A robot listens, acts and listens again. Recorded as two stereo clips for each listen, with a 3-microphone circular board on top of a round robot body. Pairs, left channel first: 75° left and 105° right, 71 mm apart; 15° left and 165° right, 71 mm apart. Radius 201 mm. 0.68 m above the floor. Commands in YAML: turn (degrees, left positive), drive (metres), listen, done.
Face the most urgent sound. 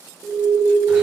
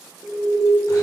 turn: -120
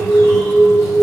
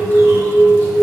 turn: 45
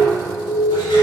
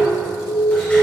done: "Facing the alarm, 1 to 2 m away."